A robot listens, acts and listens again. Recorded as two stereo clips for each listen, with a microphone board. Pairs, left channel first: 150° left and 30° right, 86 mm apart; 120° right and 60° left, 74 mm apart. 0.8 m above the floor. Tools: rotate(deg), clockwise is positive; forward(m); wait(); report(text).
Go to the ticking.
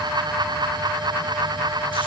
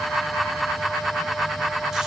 wait()
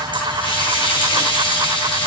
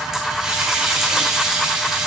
wait()
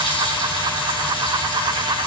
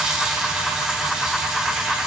report("I can't make out ticking to turn to.")